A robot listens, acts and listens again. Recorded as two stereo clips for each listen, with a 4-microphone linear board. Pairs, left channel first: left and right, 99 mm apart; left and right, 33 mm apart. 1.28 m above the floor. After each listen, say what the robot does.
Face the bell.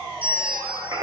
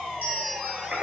Turn 65° right.
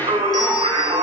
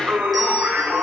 Keep listening.
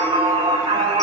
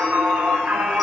Keep listening.
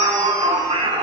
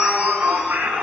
I heard a bell, but can't make it out now. It was about straight ahead or 50° right.